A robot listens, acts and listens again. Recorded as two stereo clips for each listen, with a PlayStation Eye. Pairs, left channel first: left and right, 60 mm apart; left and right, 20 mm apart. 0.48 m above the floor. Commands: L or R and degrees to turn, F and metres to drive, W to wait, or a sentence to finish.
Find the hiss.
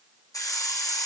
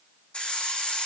L70
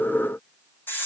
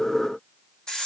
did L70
L40
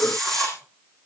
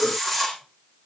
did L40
L10
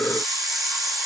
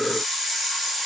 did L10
Facing the hiss.